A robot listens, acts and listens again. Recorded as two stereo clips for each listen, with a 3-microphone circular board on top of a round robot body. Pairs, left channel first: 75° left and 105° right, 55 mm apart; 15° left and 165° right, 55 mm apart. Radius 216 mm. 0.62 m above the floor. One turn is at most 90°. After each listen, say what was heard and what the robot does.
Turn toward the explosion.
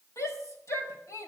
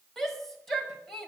Keep listening.
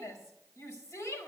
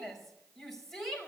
Keep listening.
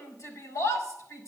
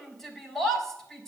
I can't make out an explosion, only a shout.